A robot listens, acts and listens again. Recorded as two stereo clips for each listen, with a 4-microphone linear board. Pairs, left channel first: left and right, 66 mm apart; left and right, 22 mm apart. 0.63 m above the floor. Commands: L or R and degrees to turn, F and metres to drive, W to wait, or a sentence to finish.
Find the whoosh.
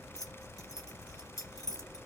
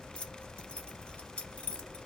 W
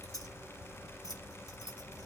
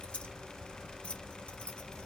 W
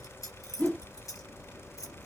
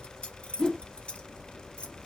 L30
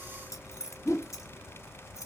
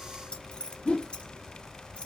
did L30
L115
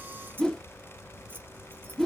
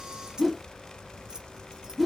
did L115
L10
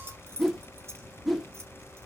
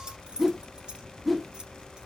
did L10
Facing the whoosh.